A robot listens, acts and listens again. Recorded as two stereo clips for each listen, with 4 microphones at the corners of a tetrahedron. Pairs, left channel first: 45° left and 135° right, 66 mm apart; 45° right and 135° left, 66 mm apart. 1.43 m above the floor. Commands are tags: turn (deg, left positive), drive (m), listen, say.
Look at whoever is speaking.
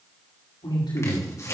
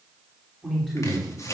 <turn deg="45"/>
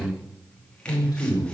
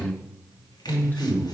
<turn deg="20"/>
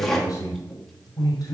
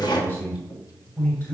<turn deg="15"/>
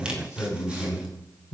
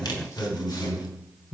<say>Facing the man speaking.</say>